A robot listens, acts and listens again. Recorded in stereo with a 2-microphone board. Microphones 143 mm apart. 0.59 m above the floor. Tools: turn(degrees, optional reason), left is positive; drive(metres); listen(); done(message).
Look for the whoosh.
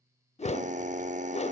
turn(degrees=50, reason="The whoosh: about 50° left or 130° left.")
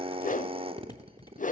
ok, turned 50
turn(degrees=75, reason="So it is at 75° left.")
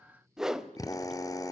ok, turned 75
done("Facing the whoosh, under 1 m away.")